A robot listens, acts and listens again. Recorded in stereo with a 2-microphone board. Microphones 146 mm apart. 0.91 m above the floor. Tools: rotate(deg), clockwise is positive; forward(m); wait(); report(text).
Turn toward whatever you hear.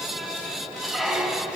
rotate(-30)
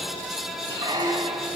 rotate(30)
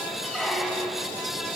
report("Facing the squeak, 1 to 2 m away.")